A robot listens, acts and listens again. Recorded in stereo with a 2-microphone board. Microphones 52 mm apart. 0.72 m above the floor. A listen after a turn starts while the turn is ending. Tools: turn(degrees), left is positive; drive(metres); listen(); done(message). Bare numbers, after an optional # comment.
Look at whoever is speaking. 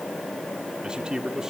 turn(-30)
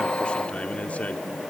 # So it is at 25° left.
turn(25)
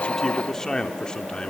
# The man speaking is now 20° left.
turn(20)
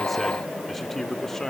# The man speaking is now 10° left.
turn(10)
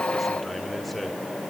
listen()
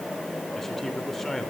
done("Facing the man speaking.")